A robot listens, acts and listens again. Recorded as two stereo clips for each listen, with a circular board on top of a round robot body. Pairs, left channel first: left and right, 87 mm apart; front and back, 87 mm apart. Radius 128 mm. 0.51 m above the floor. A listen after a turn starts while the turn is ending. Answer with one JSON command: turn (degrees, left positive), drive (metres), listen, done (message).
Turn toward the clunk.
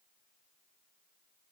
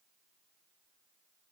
{"listen": true}
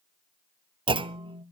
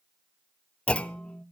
{"turn": -75}
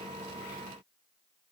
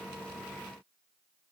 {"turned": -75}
{"done": "Facing where the clunk came from. I can't hear it now."}